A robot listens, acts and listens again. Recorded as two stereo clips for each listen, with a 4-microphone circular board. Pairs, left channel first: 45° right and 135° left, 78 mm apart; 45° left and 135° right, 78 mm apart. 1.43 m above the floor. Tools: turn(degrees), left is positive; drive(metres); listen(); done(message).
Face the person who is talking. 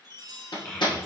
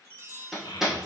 turn(degrees=30)
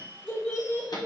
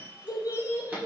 turn(degrees=15)
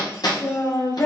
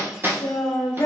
done("Found it: a child speaking, straight ahead.")